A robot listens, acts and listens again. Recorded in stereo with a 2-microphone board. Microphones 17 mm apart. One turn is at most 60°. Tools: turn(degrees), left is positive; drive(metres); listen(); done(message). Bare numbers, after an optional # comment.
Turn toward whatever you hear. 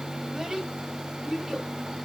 # The child speaking: about 45° right or 135° right.
turn(-45)
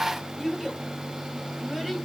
done("Facing the child speaking, 2 to 4 m away.")